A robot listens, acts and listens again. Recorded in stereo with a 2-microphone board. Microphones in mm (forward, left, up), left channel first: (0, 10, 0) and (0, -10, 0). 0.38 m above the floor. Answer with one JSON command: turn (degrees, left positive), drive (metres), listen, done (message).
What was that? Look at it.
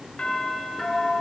{"turn": 65}
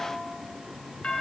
{"turn": 50}
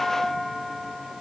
{"turn": 10}
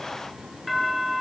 {"done": "Facing the doorbell, over 4 m away."}